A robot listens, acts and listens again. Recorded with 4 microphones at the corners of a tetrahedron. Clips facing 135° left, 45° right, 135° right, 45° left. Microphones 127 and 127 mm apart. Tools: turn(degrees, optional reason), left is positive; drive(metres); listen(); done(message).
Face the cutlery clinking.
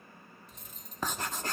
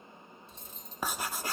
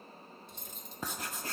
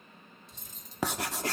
turn(degrees=-105, reason="The cutlery clinking: 105° right.")
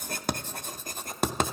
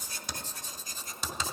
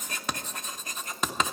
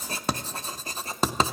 listen()
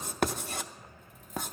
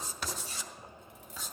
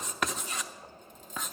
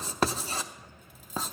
turn(degrees=-35, reason="The cutlery clinking is now 35° right.")
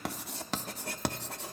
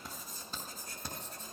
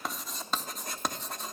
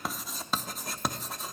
listen()
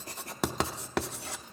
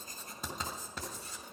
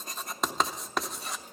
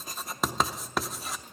listen()
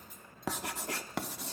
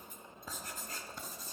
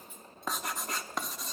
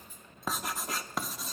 done("Facing the cutlery clinking, 1 to 2 m away.")